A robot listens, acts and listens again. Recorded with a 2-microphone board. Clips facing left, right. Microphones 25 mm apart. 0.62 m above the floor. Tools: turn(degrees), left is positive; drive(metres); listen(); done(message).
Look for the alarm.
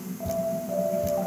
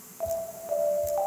turn(degrees=-35)
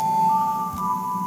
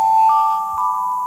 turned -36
turn(degrees=-110)
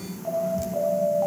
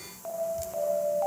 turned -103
turn(degrees=-10)
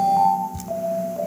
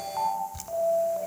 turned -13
done("Facing the alarm, over 4 m away.")